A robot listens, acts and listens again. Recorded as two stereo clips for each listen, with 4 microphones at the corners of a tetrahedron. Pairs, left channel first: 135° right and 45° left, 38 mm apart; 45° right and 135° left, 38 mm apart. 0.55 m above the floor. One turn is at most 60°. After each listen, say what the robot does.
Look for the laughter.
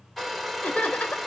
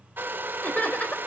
Turn 60° right.
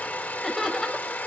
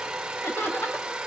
Turn 50° right.
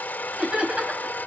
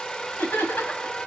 Turn 10° right.
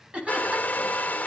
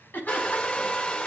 Turn 10° right.
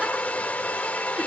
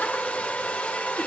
Keep listening.
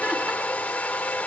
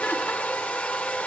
Keep listening.
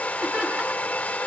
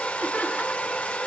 Facing where the laughter came from. I can't hear it now.